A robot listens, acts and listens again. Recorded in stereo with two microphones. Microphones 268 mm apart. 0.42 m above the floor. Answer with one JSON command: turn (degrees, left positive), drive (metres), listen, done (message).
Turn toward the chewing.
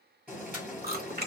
{"turn": -40}
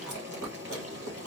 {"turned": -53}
{"turn": -85}
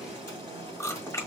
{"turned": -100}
{"turn": 10}
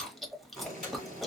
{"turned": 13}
{"done": "Facing the chewing."}